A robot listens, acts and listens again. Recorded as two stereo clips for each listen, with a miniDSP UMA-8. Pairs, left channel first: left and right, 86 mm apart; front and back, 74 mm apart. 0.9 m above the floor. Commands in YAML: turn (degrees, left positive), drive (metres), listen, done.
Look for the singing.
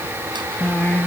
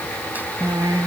turn: 155
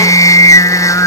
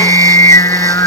turn: 45
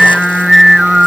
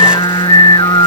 done: "Facing the singing."